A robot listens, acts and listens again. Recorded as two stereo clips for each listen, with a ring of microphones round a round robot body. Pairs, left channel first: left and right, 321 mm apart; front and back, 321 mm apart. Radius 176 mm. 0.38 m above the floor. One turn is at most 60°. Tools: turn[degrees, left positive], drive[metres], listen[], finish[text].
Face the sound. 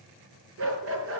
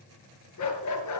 Thought: The dog barking: 35° right.
Action: turn[-35]
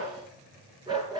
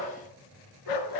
Thought: The dog barking is now 10° right.
Action: turn[-10]
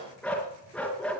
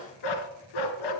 Action: finish[Facing the dog barking.]